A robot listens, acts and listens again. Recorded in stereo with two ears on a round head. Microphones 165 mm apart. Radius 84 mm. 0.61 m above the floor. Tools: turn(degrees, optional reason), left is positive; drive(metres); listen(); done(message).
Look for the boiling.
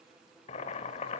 turn(degrees=35, reason="The boiling: about 35° left or 145° left.")
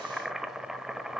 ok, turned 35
done("Found it: boiling, straight ahead, 1 to 2 m away.")